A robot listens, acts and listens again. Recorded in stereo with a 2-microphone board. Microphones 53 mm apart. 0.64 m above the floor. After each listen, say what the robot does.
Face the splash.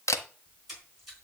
Turn 30° right.
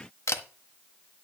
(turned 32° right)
Keep listening.
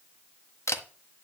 I heard a splash, but can't make it out now. It was about 25° left or 140° right.